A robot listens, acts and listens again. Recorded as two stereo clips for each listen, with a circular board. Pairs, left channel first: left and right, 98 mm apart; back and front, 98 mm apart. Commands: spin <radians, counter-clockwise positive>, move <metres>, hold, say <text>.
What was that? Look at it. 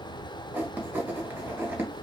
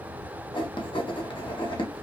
spin -2.79
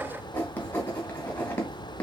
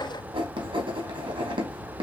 spin 0.35
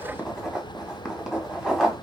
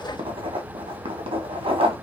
say Found it: writing, straight ahead, 1 to 2 m away.